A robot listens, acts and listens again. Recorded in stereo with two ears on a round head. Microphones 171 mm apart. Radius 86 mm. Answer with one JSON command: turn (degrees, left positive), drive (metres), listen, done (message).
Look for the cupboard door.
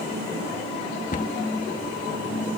{"turn": 45}
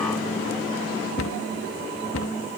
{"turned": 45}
{"turn": 90}
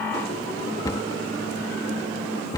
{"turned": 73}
{"turn": 20}
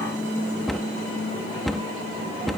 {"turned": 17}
{"done": "Found it: a cupboard door, straight ahead."}